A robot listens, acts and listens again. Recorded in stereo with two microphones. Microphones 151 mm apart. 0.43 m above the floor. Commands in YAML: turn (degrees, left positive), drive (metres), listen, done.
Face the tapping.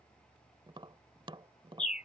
turn: -35
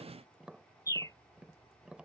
turn: -10
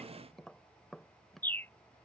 done: "Facing the tapping."